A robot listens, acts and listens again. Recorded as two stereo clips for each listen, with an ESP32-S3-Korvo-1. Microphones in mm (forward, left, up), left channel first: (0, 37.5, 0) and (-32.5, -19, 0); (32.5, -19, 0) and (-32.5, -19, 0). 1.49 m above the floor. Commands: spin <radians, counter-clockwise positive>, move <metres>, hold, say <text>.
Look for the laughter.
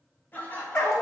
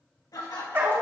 say Facing the laughter.